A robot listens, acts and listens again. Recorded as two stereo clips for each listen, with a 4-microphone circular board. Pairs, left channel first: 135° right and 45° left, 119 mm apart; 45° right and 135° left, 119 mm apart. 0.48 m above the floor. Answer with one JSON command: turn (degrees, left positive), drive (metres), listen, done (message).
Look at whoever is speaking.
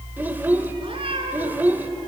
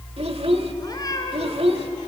{"turn": 115}
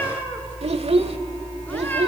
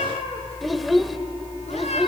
{"turn": 45}
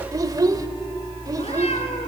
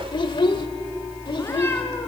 {"done": "Facing the child speaking."}